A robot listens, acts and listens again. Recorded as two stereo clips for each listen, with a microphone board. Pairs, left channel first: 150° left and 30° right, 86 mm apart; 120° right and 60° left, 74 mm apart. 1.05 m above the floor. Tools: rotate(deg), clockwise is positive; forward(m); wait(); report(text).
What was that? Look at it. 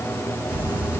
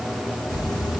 rotate(105)
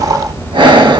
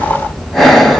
rotate(40)
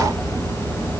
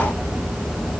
rotate(10)
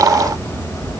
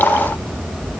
report("Facing the breathing, 1 to 2 m away.")